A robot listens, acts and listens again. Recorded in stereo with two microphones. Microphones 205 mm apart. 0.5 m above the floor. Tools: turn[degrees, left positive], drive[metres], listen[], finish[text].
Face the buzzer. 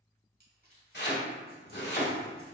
Action: listen[]
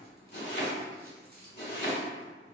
Action: listen[]
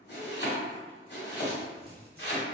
Action: finish[I can't make out a buzzer, only chopping and crumpling.]